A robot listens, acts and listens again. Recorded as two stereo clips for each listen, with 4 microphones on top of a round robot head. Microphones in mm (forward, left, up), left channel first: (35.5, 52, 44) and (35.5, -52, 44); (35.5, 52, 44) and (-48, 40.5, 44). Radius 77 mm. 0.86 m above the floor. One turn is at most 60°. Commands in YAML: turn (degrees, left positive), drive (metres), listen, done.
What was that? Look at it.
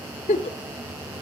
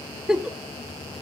turn: 60
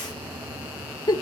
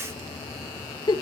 turn: 40
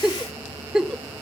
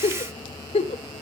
done: "Facing the giggle."